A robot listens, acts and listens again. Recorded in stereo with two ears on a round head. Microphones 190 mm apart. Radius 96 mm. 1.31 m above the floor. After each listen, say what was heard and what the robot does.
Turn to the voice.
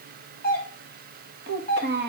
The child speaking: about 55° right or 125° right. Turn 55° right.
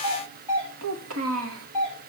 So it is at 70° right. Turn 70° right.
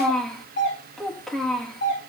Facing the child speaking, 1 to 2 m away.